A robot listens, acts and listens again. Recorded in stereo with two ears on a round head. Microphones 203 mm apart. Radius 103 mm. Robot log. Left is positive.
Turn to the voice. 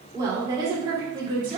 note: The woman speaking: about 25° right or 155° right.
cmd yaw -25
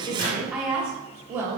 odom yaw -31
cmd yaw -30
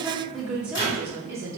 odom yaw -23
note: The woman speaking: about 15° right or 165° right.
cmd yaw -15
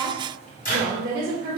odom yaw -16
note: The woman speaking: about 20° right or 160° right.
cmd yaw -20
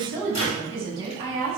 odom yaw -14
cmd yaw -30
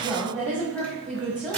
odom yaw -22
note: So it is at 10° left.
cmd yaw +10
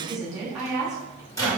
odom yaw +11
end: Found it: a woman speaking, straight ahead.